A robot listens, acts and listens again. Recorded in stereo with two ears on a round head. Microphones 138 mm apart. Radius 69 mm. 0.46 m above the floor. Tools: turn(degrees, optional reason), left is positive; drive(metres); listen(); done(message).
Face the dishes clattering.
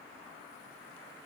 listen()
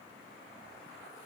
listen()
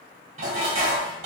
turn(degrees=-45, reason="The dishes clattering: about 45° right or 135° right.")
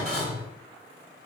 done("Facing the dishes clattering.")